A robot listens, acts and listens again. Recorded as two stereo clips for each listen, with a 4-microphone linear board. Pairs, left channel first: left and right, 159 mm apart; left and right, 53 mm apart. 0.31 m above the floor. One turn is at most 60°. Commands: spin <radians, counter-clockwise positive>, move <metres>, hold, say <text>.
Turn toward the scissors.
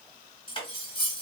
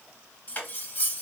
hold
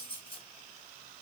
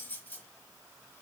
hold
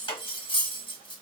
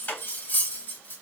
say I can't make out scissors, only cutlery clinking.